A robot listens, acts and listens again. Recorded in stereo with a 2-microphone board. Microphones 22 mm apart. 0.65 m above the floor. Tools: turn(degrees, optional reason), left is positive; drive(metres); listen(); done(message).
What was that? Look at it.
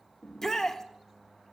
turn(degrees=20, reason="The shout: about 20° left or 160° left.")
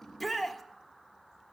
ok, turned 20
done("Facing the shout.")